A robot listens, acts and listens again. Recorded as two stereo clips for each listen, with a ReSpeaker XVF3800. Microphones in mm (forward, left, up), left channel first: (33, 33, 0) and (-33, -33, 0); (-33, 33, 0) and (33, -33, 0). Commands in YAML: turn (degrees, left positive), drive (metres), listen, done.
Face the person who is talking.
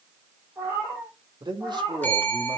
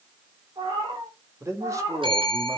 turn: -100
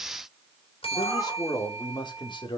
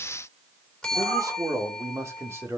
turn: 20
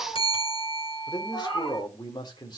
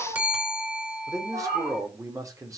done: "Found it: a man speaking, straight ahead."